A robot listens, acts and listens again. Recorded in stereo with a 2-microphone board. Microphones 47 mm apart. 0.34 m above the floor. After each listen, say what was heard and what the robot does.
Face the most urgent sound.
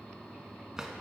Keep listening.
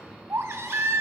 Turn 90° right.
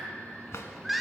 Found it: a baby crying, straight ahead.